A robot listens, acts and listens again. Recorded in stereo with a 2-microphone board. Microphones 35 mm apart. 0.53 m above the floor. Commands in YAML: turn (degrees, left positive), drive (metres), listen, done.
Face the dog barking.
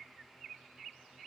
listen: true
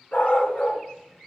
turn: 50
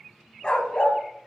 turn: 40
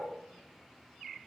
listen: true
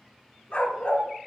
turn: 40
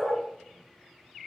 done: "Found it: a dog barking, straight ahead."